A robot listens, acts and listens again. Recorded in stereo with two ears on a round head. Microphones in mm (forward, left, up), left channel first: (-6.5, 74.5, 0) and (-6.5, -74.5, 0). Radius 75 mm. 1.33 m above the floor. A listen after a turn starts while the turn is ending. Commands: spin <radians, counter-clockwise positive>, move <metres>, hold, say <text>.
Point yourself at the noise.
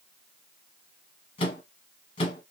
spin 0.52
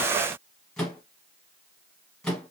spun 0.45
say Facing the microwave.